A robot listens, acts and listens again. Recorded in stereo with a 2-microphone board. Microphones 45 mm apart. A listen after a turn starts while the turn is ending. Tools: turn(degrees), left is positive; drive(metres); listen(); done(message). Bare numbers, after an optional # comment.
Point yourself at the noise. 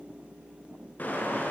# The car horn: about 40° left or 140° left.
turn(40)
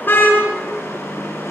# So it is at 100° left.
turn(100)
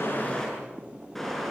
done("Found it: a car horn, straight ahead, over 4 m away.")